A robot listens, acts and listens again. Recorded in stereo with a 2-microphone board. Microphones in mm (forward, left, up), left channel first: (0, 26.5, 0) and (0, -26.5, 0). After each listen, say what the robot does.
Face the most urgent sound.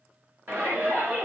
Turn 40° right.
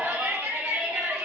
Turn 90° right.
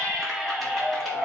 Found it: a shout, straight ahead, 1 to 2 m away.